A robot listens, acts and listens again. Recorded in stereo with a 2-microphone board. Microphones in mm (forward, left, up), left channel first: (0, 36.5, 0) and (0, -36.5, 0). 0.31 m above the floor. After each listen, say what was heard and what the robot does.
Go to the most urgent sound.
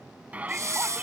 The shout: about 20° right or 160° right. Turn 20° right.
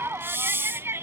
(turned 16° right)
So it is at 145° right. Turn 145° right.
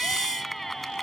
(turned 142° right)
Drive 1.0 m forward.
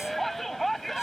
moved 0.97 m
Drive 1.0 m forward.
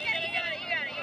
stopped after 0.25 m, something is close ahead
Arrived at the shout, straight ahead.